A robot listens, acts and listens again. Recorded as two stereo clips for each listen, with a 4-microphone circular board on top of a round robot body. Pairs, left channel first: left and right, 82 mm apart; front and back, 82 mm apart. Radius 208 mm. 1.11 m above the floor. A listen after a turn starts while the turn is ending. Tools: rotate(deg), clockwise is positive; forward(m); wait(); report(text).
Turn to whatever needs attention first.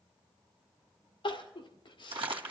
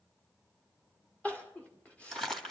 rotate(-75)
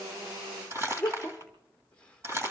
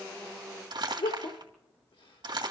rotate(-15)
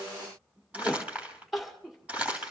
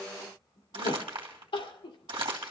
report("Found it: crying, straight ahead.")